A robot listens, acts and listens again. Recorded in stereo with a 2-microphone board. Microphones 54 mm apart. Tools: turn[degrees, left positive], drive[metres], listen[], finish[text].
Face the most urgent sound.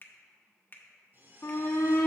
Thought: The shout: about 50° left or 130° left.
Action: turn[50]
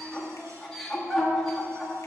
Action: finish[Facing the shout, 1 to 2 m away.]